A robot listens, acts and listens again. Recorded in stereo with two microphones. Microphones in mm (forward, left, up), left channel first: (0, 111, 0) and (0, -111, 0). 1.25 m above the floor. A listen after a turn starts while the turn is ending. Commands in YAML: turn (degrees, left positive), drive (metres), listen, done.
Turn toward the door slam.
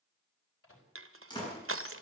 turn: 20
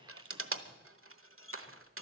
listen: true
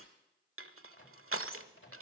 done: "I heard a door slam, but can't make it out now. It was about straight ahead or 140° left."